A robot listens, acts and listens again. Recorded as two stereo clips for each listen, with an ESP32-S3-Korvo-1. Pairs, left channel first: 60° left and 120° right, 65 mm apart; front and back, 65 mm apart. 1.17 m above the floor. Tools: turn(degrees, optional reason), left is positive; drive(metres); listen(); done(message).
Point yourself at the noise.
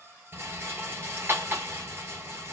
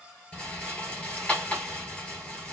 turn(degrees=-70, reason="The rattle: 70° right.")
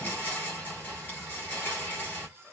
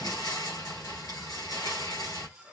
done("Found it: a rattle, straight ahead.")